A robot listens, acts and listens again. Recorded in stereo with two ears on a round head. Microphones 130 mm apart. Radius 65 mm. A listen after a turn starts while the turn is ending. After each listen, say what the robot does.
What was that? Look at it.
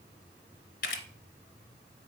Turn 60° left.
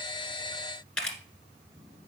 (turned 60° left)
Found it: a camera shutter, straight ahead, 1 to 2 m away.